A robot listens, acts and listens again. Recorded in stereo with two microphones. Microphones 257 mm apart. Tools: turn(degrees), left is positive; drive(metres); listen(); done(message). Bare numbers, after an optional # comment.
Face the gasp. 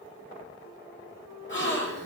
# The gasp: about 45° left or 135° left.
turn(45)
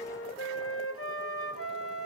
listen()
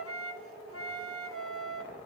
done("I heard a gasp, but can't make it out now. It was about straight ahead or 90° left.")